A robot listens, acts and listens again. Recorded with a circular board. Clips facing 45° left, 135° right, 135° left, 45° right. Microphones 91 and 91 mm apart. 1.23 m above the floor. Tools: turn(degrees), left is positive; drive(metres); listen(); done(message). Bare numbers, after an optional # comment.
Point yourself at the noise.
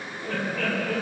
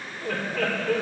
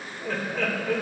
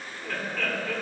# The laughter: 150° right.
turn(-150)
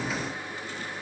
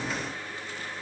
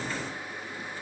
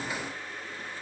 listen()
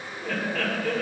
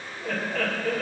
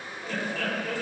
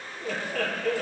# The laughter is now 50° right.
turn(-50)
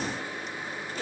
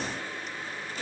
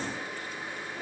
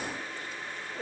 done("Found it: laughter, straight ahead.")